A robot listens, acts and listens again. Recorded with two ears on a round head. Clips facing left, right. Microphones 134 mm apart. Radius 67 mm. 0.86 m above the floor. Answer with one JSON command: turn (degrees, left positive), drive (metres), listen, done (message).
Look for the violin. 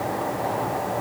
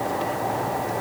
{"listen": true}
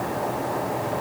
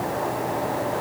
{"listen": true}
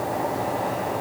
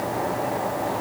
{"done": "I can't make out a violin to turn to."}